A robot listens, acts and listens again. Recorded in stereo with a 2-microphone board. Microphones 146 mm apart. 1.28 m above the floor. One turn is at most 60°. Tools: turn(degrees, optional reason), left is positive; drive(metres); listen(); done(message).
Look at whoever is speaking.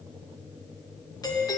listen()
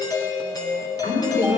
turn(degrees=60, reason="The woman speaking: about 65° left or 115° left.")
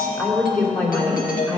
turn(degrees=10, reason="So it is at 10° left.")
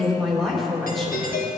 done("Found it: a woman speaking, straight ahead.")